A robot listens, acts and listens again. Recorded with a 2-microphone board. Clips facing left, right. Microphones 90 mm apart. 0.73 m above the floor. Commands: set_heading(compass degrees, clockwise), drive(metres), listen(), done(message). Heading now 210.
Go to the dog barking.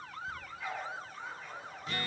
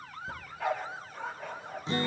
set_heading(275)
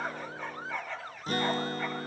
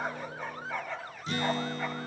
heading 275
drive(1.0)
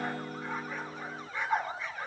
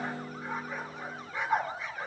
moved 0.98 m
drive(1.0)
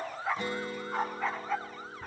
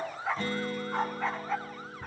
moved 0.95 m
drive(1.0)
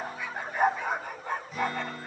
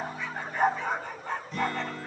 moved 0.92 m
set_heading(265)
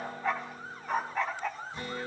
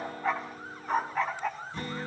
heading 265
drive(1.0)
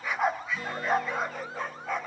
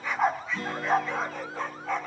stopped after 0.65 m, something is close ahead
done("Arrived at the dog barking, straight ahead.")